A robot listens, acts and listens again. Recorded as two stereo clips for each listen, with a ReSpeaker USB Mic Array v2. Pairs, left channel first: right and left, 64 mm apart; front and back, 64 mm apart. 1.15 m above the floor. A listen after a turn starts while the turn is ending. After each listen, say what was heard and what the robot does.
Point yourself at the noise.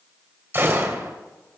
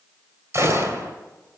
The gunshot: 140° left. Turn 140° left.
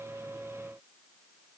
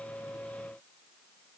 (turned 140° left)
I heard a gunshot from this way, but can't make it out now.